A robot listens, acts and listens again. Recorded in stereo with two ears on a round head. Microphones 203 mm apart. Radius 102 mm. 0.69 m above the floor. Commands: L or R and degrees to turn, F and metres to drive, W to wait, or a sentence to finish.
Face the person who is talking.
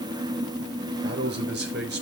R45
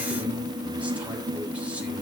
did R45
W
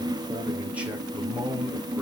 Facing the man speaking, 2 to 4 m away.